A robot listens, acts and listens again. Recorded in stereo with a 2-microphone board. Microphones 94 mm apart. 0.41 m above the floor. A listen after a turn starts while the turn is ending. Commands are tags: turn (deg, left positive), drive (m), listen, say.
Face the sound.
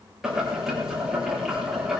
<turn deg="-30"/>
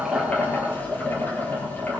<turn deg="25"/>
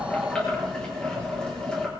<turn deg="10"/>
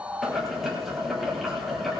<say>Found it: boiling, straight ahead.</say>